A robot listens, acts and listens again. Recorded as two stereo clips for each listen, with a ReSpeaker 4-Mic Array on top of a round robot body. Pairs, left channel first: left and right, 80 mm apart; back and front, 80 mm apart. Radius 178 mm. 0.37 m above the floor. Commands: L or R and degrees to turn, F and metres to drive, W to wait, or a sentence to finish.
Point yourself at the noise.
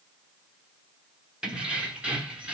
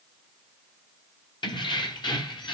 R165
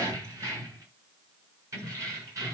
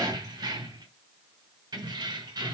R35
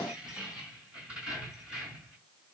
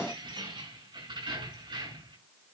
R10
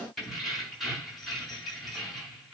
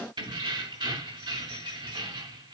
Facing the keys jangling.